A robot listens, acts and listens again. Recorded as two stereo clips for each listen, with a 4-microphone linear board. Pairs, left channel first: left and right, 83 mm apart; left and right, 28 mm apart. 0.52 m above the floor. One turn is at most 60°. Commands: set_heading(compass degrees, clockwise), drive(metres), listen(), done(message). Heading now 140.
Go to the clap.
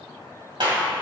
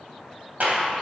set_heading(200)
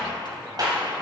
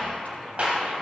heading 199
set_heading(254)
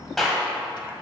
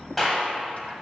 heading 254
drive(1.0)
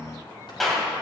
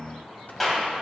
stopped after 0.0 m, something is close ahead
done("Something is in my way. I am facing the clap but have not reached it.")